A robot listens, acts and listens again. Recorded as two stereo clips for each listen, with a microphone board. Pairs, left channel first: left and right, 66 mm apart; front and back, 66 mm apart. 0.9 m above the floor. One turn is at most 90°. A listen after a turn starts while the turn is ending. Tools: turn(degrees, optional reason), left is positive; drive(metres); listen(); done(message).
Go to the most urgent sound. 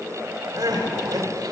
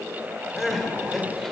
turn(degrees=-85, reason="The crying: 85° right.")
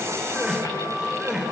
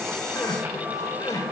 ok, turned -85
turn(degrees=-10, reason="The crying is now 10° right.")
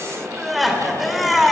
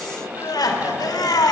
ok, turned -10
drive(metres=1.0)
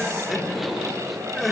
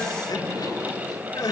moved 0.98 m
drive(metres=1.0)
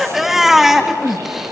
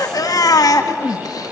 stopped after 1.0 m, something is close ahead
done("I am next to the crying.")